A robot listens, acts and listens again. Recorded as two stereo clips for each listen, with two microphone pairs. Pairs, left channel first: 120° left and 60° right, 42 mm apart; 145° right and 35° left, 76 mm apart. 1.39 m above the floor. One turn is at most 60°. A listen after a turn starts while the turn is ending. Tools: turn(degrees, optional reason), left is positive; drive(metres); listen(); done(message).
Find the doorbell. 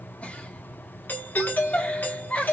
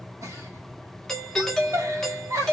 turn(degrees=60, reason="The doorbell: 135° left.")
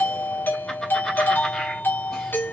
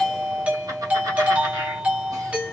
turn(degrees=60, reason="The doorbell is now 105° left.")
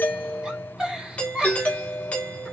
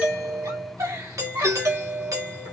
turn(degrees=60, reason="The doorbell is now 70° left.")
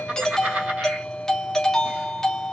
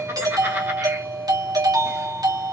turn(degrees=40, reason="The doorbell is now 40° left.")
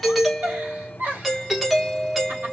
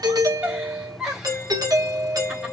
turn(degrees=20, reason="The doorbell is now 20° left.")
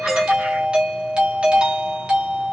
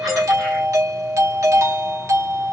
done("Found it: a doorbell, straight ahead, 1 to 2 m away.")